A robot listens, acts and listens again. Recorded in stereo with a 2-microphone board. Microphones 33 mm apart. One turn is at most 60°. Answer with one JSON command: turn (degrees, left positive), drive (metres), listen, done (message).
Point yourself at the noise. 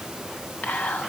{"turn": 60}
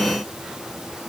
{"listen": true}
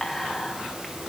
{"done": "Facing the whispering, 2 to 4 m away."}